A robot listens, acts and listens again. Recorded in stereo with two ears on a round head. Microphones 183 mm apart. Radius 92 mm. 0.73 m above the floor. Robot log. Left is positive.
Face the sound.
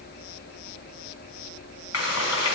cmd yaw +90
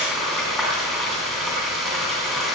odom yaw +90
end: Found it: frying, straight ahead.